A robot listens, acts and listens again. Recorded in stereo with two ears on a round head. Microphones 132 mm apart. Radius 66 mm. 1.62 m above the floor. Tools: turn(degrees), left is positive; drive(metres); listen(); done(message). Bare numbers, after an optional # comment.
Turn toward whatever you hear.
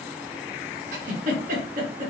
# The giggle: about 55° right or 125° right.
turn(-55)
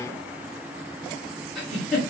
done("Found it: a giggle, straight ahead.")